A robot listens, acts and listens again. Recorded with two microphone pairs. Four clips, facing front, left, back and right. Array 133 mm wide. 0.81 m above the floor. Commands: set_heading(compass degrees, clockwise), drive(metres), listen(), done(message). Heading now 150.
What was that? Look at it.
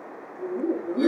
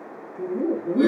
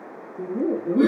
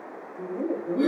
set_heading(345)
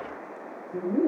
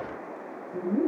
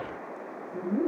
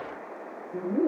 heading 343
set_heading(23)
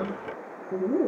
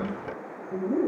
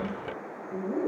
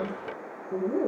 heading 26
set_heading(41)
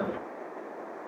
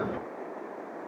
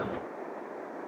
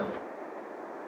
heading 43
listen()
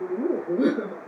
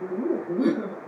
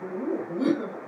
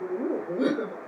set_heading(68)
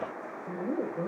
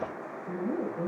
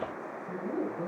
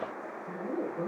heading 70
done("Facing the laughter.")